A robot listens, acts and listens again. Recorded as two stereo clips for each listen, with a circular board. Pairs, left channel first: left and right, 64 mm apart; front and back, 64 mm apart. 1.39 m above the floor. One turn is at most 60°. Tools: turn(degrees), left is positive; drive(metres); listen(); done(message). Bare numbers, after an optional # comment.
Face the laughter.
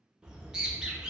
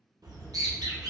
listen()
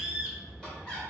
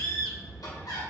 # The laughter: 10° left.
turn(10)
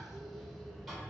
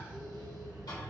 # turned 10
listen()
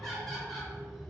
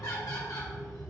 done("Facing the laughter.")